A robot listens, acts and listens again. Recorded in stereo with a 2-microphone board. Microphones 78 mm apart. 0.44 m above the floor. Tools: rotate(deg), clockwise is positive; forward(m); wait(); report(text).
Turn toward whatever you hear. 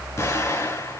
rotate(-35)
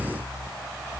wait()
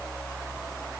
report("I heard an explosion, but can't make it out now. It was about straight ahead or 110° left.")